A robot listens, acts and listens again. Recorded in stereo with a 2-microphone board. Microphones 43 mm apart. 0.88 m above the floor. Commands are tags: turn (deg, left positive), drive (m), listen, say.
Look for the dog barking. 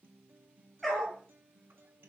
<turn deg="30"/>
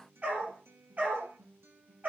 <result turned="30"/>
<turn deg="-40"/>
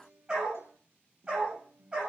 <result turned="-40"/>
<turn deg="-20"/>
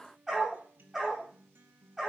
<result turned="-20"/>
<say>Found it: a dog barking, straight ahead.</say>